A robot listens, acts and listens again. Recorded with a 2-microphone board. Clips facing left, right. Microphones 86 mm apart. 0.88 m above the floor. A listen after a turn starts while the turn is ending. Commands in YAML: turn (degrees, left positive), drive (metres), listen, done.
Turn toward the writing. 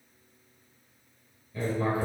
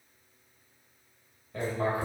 turn: -90
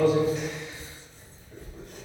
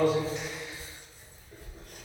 done: "Found it: writing, straight ahead, 2 to 4 m away."